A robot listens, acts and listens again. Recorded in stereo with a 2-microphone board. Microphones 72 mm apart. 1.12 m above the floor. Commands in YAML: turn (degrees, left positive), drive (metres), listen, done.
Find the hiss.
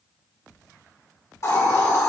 turn: 45
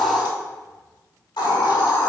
turn: 90
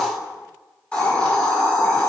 turn: 15
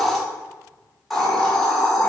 done: "Found it: a hiss, straight ahead."